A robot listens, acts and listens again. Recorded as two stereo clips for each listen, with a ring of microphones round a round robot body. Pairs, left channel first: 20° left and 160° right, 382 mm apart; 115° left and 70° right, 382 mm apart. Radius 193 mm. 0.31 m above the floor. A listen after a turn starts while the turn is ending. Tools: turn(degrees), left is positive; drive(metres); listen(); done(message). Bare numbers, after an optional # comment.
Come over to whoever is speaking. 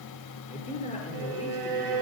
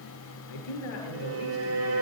# The man speaking: 95° left.
turn(95)
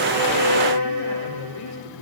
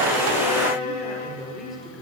# The man speaking is now 20° left.
turn(20)
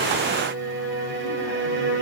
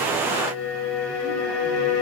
listen()
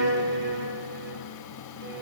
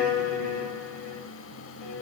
listen()
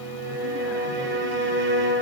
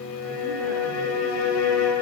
done("Facing where the man speaking came from. I can't hear it now. I did not reach it.")